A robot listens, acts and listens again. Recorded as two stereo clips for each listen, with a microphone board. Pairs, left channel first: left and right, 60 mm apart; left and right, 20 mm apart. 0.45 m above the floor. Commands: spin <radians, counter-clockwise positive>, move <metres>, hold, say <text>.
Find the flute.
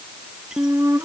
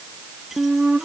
spin -0.87
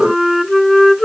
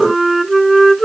say Facing the flute.